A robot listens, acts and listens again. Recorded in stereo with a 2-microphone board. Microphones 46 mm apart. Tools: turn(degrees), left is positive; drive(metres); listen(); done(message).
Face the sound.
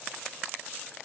listen()
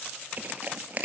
turn(degrees=-35)
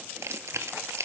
turn(degrees=-105)
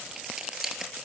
turn(degrees=-10)
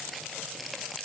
listen()
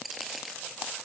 done("Found it: crushing, straight ahead, 1 to 2 m away.")